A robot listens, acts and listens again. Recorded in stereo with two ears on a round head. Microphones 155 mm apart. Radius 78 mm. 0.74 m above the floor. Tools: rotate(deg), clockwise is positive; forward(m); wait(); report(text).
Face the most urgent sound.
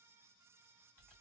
wait()
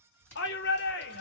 rotate(-65)
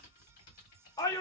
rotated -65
rotate(-20)
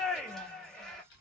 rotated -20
report("Found it: a shout, straight ahead, under 1 m away.")